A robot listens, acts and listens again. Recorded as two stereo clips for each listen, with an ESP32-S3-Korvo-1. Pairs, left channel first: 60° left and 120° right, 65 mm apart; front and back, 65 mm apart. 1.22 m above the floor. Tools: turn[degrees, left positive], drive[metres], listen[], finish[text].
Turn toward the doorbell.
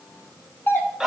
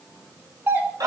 Thought: The doorbell: 120° left.
Action: turn[120]
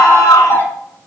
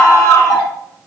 Action: finish[Found it: a doorbell, straight ahead, 1 to 2 m away.]